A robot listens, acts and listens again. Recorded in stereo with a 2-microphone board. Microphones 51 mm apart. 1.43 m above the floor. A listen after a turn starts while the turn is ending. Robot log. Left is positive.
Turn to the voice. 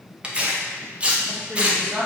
note: The woman speaking: about 55° right or 125° right.
cmd yaw -55
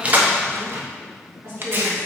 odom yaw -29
note: So it is at 105° right.
cmd yaw -105
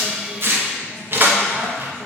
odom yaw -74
note: Nothing new. It was at 30° right.
cmd yaw -30
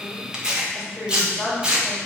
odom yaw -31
end: Found it: a woman speaking, straight ahead.